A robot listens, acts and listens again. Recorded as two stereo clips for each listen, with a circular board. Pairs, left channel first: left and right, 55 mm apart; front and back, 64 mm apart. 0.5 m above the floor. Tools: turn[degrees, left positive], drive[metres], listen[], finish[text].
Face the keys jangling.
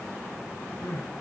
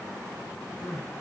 Action: listen[]
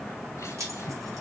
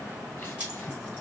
Thought: The keys jangling: 115° right.
Action: turn[-115]
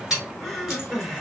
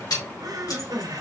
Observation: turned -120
Action: finish[Found it: keys jangling, straight ahead.]